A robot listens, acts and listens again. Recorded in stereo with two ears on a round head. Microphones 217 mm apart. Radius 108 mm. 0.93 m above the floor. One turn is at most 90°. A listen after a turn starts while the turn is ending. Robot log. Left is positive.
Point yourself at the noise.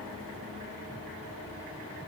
cmd idle
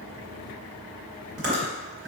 note: The chewing: about 50° right or 130° right.
cmd yaw -50
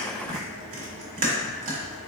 note: So it is at 85° right.
cmd yaw -85
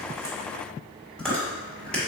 end: Found it: chewing, straight ahead.